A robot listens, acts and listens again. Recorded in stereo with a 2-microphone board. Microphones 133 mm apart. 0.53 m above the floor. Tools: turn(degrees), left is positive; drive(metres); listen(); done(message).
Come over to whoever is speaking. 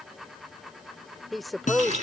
turn(degrees=30)
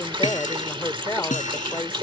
turn(degrees=150)
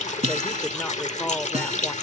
listen()
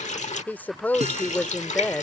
turn(degrees=15)
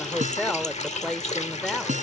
drive(metres=1.0)
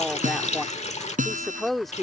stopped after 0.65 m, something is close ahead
done("Arrived at the woman speaking, straight ahead.")